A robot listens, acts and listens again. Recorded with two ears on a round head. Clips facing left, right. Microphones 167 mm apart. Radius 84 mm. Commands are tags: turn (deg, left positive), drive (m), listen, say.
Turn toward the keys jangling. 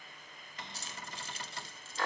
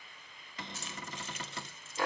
<turn deg="30"/>
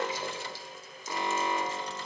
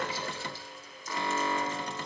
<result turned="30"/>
<listen/>
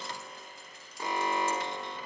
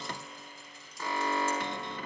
<listen/>
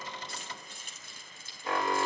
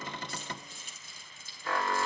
<turn deg="130"/>
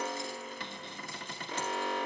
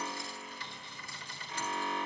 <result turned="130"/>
<listen/>
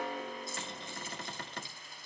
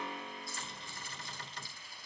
<turn deg="20"/>
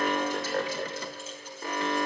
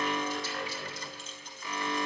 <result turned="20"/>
<listen/>
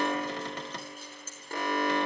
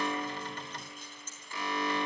<say>Found it: keys jangling, straight ahead.</say>